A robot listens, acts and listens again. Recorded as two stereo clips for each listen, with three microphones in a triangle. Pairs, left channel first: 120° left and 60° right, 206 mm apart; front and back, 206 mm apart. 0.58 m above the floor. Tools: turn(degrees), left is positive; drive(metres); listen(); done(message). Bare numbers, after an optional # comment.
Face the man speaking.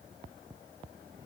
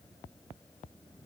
listen()
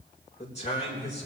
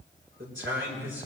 # The man speaking: 175° left.
turn(175)
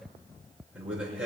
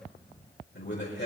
# The man speaking is now 25° left.
turn(25)
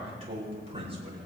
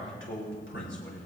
done("Facing the man speaking.")